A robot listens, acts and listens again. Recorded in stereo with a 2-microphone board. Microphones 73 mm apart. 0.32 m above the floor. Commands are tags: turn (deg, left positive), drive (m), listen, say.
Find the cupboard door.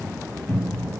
<turn deg="20"/>
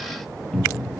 <say>Facing the cupboard door.</say>